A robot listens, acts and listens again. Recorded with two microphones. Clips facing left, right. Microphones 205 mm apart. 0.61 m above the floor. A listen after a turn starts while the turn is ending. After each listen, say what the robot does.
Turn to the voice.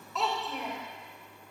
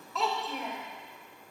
Turn 30° left.
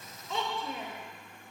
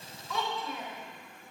Turn 155° left.
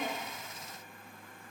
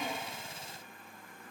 Keep listening.
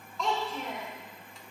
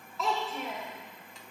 Found it: a child speaking, straight ahead, 1 to 2 m away.